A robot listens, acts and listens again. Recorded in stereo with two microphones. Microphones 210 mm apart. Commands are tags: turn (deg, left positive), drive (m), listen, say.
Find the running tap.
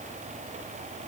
<listen/>
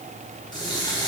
<turn deg="20"/>
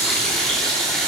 <say>Found it: a running tap, straight ahead, 2 to 4 m away.</say>